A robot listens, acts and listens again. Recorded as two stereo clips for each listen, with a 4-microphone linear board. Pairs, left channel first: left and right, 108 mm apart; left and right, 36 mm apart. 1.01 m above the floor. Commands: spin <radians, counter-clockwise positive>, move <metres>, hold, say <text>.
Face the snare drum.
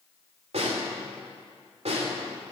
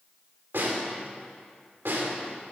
spin -1.57
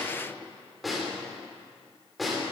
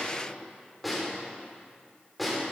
say Found it: a snare drum, straight ahead.